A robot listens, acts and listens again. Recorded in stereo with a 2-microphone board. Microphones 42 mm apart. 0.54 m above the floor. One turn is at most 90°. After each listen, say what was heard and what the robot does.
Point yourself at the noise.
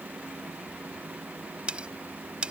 The cutlery clinking: about 25° right or 155° right. Turn 25° right.
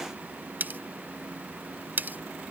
So it is at 130° right. Turn 90° right.
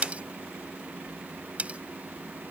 The cutlery clinking is now 35° right. Turn 35° right.
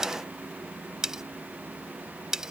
The cutlery clinking is now 15° right. Turn 15° right.
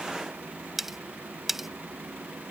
Found it: cutlery clinking, straight ahead.